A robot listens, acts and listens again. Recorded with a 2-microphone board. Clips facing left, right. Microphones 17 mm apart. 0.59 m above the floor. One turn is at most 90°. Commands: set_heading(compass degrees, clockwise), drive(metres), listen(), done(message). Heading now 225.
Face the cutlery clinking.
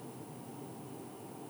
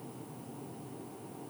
listen()
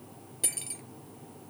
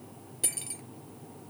set_heading(195)
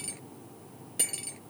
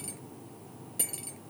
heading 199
set_heading(109)
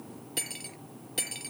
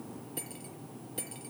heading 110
set_heading(50)
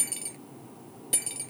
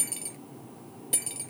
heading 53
done("Found it: cutlery clinking, straight ahead.")